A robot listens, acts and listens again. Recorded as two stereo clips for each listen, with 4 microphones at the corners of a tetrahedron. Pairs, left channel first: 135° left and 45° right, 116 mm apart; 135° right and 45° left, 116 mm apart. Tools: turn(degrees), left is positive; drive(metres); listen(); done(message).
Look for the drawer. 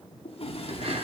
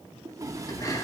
turn(degrees=105)
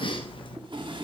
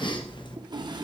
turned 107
done("Found it: a drawer, straight ahead, 1 to 2 m away.")